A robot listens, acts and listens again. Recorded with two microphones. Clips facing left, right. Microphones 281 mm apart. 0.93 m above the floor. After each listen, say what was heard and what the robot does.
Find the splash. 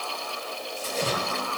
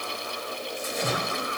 The splash: about 35° left or 145° left. Turn 35° left.
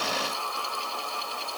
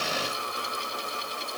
Keep listening.
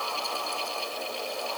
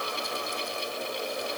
I heard a splash, but can't make it out now. It was about straight ahead or 110° left.